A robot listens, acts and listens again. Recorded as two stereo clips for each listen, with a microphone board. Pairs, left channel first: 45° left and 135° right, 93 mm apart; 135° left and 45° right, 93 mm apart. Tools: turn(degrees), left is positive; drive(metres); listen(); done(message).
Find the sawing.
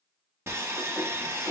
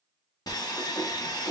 turn(degrees=170)
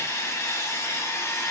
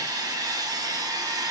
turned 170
turn(degrees=-10)
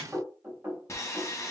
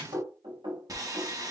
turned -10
done("Facing the sawing.")